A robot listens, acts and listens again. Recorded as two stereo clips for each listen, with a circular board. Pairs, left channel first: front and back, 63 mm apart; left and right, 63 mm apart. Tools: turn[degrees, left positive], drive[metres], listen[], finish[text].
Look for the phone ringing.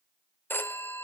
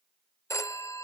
Thought: The phone ringing: 55° left.
Action: turn[55]
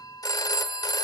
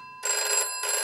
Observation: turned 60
Action: finish[Facing the phone ringing, under 1 m away.]